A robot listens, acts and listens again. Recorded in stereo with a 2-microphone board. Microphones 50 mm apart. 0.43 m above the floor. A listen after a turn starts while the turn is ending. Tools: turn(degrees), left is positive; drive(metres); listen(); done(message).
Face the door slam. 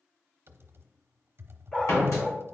turn(degrees=90)
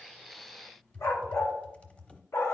done("I heard a door slam from this way, but can't make it out now.")